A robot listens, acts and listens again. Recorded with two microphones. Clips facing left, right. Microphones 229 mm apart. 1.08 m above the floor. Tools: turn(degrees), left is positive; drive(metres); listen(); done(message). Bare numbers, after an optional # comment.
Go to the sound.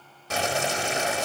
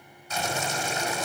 turn(90)
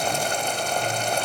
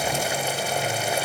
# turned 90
drive(1.0)
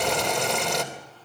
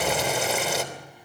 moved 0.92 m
drive(1.0)
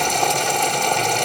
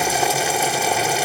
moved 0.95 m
drive(1.0)
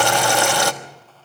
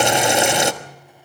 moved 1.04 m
# The boiling is now 20° right.
turn(-20)
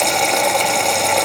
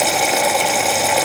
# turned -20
drive(1.0)
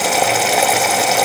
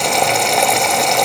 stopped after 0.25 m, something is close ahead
done("Arrived at the boiling, straight ahead.")